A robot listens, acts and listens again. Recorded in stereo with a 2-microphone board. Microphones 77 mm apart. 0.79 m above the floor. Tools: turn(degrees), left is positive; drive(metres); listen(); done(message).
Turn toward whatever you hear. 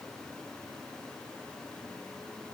listen()
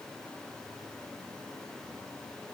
listen()
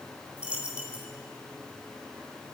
turn(degrees=-15)
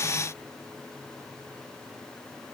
listen()
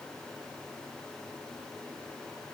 done("I heard a dropped coin, but can't make it out now. It was about straight ahead or 150° right.")